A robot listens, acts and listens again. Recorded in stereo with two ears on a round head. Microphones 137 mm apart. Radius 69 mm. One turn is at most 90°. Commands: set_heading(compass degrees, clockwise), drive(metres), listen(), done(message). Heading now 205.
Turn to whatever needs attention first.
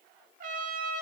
listen()
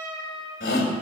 set_heading(115)
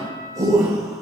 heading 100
set_heading(125)
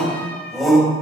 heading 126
done("Found it: a shout, straight ahead, 2 to 4 m away.")